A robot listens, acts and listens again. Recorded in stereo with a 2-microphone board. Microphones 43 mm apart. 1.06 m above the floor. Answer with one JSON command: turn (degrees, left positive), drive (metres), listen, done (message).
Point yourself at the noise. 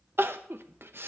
{"turn": -60}
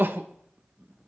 {"turn": -55}
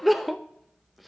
{"done": "Facing the crying."}